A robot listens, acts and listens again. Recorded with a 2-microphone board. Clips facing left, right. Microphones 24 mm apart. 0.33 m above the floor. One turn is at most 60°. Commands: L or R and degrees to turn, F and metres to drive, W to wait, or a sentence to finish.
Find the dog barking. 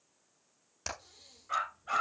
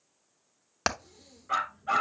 R20
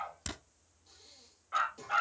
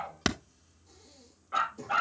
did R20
Facing the dog barking.